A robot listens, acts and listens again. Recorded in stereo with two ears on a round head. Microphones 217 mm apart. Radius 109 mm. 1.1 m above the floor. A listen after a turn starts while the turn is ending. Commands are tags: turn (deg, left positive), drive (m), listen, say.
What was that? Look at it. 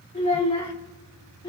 <turn deg="20"/>
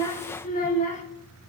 <turn deg="30"/>
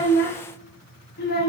<turn deg="140"/>
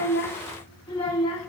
<turn deg="25"/>
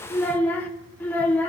<turn deg="10"/>
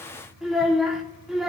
<say>Facing the child speaking, 2 to 4 m away.</say>